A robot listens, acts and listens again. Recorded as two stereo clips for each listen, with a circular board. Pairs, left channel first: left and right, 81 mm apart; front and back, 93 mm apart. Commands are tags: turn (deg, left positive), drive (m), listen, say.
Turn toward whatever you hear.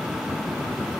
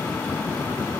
<listen/>
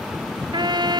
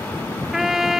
<turn deg="-95"/>
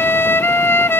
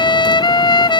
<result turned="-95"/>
<turn deg="30"/>
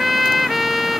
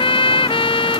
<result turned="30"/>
<say>Facing the trumpet.</say>